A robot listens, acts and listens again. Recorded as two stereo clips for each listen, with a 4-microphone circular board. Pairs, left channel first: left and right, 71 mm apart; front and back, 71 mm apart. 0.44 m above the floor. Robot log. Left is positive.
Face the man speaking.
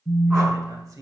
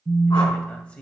note: The man speaking: 70° right.
cmd yaw -70
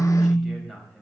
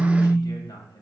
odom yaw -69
end: Facing the man speaking, 2 to 4 m away.